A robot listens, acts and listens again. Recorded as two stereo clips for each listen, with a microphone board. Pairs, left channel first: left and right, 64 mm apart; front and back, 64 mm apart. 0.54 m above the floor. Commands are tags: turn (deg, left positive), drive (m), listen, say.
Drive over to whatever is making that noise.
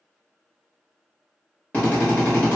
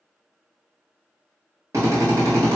<turn deg="155"/>
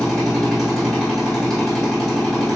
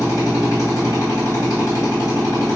<drive m="1.0"/>
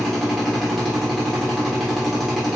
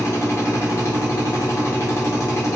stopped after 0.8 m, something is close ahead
<say>I am next to the drill.</say>